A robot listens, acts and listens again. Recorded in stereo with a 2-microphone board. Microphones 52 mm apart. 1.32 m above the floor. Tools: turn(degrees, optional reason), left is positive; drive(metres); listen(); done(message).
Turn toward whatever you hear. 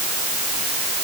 listen()
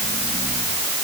listen()
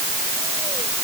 done("I can't make out anything to turn to.")